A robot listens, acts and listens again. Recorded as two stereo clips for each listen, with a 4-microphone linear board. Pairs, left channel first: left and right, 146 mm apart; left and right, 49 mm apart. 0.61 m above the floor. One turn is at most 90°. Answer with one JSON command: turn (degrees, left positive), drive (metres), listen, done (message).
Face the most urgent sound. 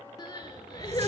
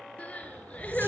{"turn": 30}
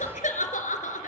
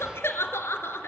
{"turn": 90}
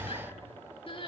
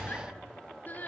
{"turn": 40}
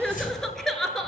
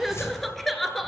{"done": "Found it: crying, straight ahead."}